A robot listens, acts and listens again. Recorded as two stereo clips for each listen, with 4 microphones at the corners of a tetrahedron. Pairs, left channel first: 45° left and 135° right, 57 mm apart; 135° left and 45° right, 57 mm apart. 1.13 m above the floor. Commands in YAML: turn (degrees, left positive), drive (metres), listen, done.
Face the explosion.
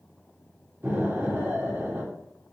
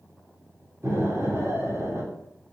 turn: -85
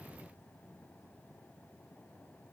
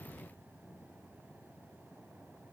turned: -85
done: "Facing where the explosion came from. I can't hear it now."